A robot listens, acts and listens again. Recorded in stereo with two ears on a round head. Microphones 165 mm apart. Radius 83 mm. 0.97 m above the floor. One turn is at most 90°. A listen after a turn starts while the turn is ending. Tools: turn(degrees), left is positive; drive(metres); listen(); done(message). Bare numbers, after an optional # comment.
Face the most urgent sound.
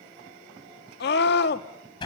# The scream: about 65° left or 115° left.
turn(65)
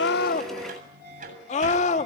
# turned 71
# So it is at 40° left.
turn(40)
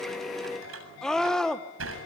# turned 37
done("Facing the scream, 2 to 4 m away.")